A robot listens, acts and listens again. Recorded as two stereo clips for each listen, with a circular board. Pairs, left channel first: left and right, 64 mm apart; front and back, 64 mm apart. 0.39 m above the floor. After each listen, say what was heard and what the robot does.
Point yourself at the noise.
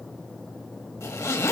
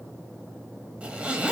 The zipper: 115° left. Turn 115° left.
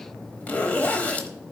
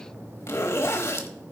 The zipper is now 30° left. Turn 30° left.
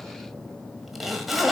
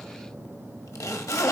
Facing the zipper, 1 to 2 m away.